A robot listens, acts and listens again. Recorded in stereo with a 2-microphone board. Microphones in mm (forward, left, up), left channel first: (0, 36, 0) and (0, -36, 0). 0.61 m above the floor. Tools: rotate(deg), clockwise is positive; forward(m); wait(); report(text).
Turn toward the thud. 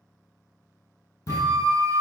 rotate(-50)
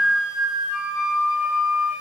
wait()
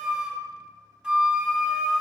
report("I heard a thud, but can't make it out now. It was about straight ahead or 80° left.")